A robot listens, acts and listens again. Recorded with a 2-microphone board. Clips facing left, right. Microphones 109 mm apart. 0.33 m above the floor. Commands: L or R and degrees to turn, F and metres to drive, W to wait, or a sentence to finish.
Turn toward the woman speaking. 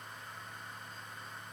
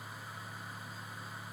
W
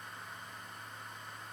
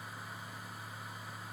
W
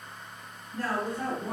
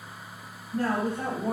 R30
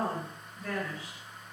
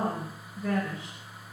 R20
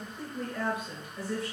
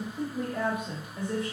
R20
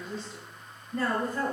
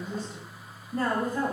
R10
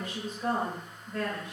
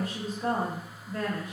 Facing the woman speaking, 1 to 2 m away.